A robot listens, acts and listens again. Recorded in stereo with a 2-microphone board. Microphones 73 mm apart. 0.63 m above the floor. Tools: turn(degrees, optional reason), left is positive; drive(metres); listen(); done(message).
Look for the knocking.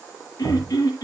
turn(degrees=-45, reason="The knocking: about 45° right or 135° right.")
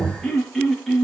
done("Facing the knocking.")